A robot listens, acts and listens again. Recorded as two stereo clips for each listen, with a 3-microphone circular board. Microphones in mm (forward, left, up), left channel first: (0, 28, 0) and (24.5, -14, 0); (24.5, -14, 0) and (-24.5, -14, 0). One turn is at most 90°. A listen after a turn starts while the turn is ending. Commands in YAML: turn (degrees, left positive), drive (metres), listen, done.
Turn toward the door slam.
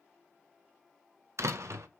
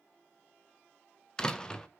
turn: -75
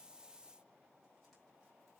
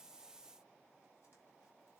done: "I heard a door slam from this way, but can't make it out now."